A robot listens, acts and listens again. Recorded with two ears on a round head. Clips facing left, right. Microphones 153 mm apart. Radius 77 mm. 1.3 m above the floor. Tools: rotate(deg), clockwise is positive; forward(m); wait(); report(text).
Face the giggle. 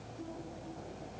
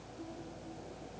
wait()
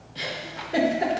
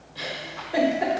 rotate(-25)
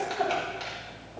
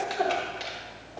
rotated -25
report("Facing the giggle.")